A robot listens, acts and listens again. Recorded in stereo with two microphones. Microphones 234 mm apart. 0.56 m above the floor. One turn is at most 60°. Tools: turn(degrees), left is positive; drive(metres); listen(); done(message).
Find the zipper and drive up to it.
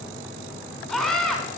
listen()
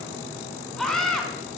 listen()
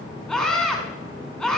done("I can't make out a zipper to turn to.")